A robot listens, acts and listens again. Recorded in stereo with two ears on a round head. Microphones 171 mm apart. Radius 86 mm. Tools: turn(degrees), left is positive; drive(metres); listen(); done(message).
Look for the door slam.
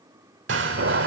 turn(degrees=-65)
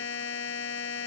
listen()
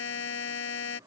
done("I heard a door slam, but can't make it out now. It was about straight ahead or 50° right.")